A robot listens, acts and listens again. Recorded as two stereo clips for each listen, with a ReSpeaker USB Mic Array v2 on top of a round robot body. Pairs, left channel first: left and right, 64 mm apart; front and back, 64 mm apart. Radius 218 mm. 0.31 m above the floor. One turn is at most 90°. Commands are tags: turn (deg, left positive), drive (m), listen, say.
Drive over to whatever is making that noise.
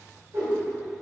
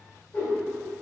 <turn deg="-60"/>
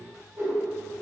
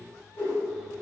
<turn deg="-40"/>
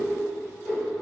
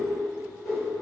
<drive m="1.0"/>
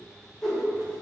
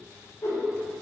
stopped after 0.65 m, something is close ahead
<say>I am next to the whoosh.</say>